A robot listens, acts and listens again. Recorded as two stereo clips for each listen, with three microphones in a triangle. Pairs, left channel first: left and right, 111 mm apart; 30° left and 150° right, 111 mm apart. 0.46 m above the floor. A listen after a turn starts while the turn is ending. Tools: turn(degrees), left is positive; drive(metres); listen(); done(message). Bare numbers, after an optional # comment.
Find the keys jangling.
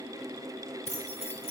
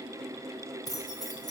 # The keys jangling: 85° left.
turn(85)
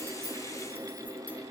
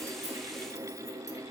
listen()
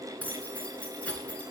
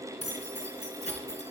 # The keys jangling is now 10° left.
turn(10)
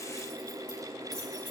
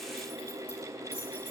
listen()
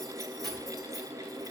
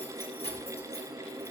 done("Found it: keys jangling, straight ahead, over 4 m away.")